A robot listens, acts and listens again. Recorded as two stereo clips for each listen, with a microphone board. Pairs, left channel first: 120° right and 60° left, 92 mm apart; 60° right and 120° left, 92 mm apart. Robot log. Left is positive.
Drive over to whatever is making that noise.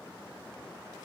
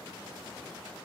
cmd idle
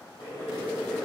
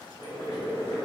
note: The boiling: 85° right.
cmd yaw -85
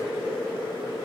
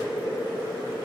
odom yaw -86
cmd fwd 1.0
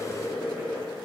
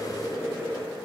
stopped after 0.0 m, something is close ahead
end: Something is in my way. I am facing the boiling but have not reached it.